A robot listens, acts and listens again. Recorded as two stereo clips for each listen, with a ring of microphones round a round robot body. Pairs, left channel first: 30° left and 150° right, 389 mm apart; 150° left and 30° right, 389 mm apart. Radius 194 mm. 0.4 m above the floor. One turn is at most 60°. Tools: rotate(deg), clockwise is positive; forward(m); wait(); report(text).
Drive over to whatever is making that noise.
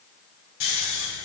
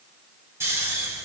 rotate(-55)
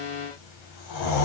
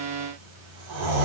forward(1.0)
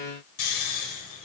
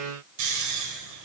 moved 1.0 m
forward(1.0)
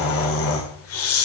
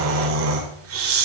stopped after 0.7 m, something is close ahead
report("I am next to the snoring.")